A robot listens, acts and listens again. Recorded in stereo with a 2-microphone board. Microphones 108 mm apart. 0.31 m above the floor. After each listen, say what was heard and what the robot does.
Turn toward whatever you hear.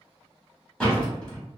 Turn 30° left.
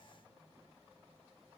Keep listening.
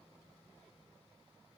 I heard a door slam, but can't make it out now. It was about 20° right or 140° left.